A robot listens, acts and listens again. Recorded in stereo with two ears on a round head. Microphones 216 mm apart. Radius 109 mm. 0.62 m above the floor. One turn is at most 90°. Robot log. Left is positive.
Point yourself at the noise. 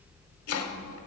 note: The chopping: about 75° left or 105° left.
cmd yaw +75
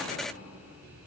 cmd idle
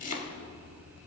note: So it is at 30° left.
cmd yaw +30
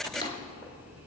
note: The chopping is now 20° left.
cmd yaw +20
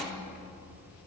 cmd idle
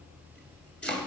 end: Facing the chopping.